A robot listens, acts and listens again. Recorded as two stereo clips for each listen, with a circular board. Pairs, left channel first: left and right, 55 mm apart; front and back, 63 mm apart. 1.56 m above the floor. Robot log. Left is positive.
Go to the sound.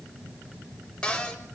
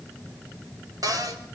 note: The cupboard door: 165° left.
cmd yaw +165
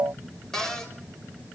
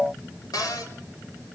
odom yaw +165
note: The cupboard door is now 10° left.
cmd yaw +10
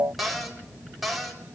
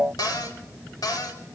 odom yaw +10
cmd fwd 1.0
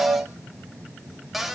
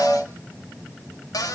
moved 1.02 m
cmd fwd 1.0
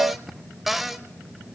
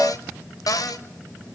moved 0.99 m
cmd fwd 1.0
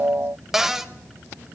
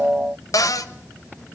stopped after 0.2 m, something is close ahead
end: I am next to the cupboard door.